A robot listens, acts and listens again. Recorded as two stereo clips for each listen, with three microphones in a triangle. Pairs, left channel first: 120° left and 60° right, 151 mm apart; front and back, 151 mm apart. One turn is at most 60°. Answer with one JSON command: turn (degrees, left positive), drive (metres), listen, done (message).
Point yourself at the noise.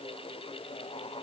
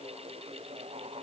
{"listen": true}
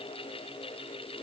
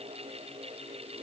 {"listen": true}
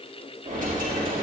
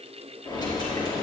{"turn": -60}
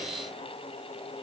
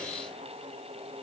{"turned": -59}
{"done": "Facing where the dropped coin came from. I can't hear it now."}